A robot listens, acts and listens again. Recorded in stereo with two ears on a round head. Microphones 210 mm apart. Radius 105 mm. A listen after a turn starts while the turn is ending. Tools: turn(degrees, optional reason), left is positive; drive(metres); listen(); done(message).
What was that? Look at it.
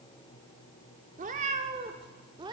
turn(degrees=-20, reason="The cat meowing: about 20° right or 160° right.")
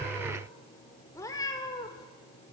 turn(degrees=20, reason="So it is at 20° left.")
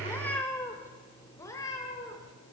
turn(degrees=15, reason="The cat meowing is now 15° left.")
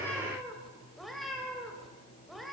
done("Facing the cat meowing, 2 to 4 m away.")